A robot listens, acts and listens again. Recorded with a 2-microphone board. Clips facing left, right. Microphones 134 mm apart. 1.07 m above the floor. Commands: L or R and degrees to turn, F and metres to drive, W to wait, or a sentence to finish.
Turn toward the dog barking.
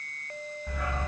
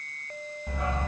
R25
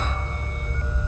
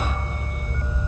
R15
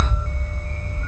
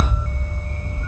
R15
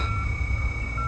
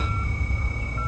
R15
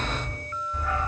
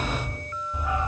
R20
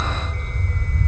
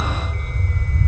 Facing the dog barking, 2 to 4 m away.